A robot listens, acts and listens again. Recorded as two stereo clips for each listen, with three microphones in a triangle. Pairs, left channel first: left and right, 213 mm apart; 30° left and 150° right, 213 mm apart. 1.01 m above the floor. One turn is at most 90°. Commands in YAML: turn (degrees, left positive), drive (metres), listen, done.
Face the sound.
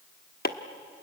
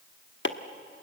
turn: 50
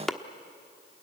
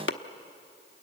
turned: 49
done: "Found it: chopping, straight ahead."